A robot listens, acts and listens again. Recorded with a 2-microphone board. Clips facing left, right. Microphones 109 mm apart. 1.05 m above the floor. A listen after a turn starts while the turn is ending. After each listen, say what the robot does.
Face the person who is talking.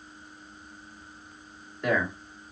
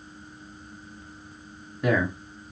Turn 30° left.
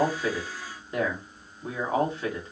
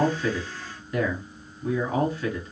Turn 150° left.
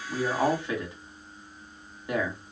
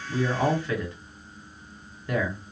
Turn 20° left.
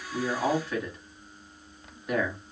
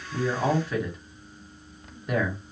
Facing the man speaking, 1 to 2 m away.